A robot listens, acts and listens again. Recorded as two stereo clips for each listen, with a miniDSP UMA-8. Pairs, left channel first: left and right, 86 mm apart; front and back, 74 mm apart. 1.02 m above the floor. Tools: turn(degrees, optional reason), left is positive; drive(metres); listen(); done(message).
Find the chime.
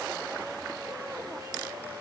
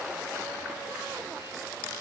listen()
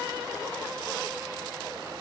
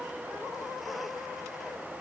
listen()
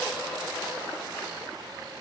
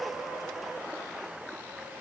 done("I can't make out a chime to turn to.")